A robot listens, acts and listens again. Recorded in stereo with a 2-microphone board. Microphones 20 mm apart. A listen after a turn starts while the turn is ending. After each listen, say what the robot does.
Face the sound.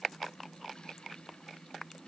Keep listening.
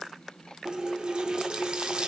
Turn 50° right.
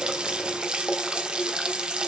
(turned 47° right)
Turn 70° right.
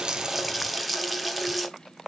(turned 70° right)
Facing the running tap.